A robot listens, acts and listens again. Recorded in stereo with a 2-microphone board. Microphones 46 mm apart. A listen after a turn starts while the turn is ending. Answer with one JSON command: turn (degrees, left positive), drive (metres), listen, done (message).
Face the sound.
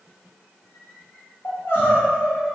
{"turn": 55}
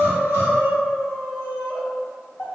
{"turn": 70}
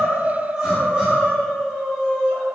{"turn": -20}
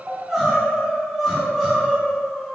{"done": "Found it: crying, straight ahead."}